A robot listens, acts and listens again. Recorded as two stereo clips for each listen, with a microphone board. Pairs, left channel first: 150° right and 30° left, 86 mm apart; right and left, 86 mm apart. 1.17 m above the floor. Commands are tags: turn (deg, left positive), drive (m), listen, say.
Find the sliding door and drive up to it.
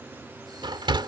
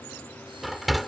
<drive m="1.0"/>
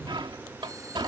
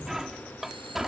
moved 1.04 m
<drive m="1.0"/>
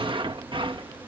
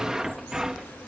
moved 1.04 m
<drive m="1.0"/>
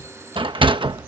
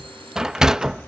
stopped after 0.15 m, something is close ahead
<say>I am next to the sliding door.</say>